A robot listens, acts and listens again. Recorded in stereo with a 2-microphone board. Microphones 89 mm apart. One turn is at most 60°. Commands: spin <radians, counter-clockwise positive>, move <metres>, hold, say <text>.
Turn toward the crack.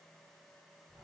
hold
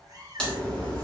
spin 0.52
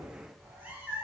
hold
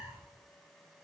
say I heard a crack, but can't make it out now. It was about 20° right or 140° left.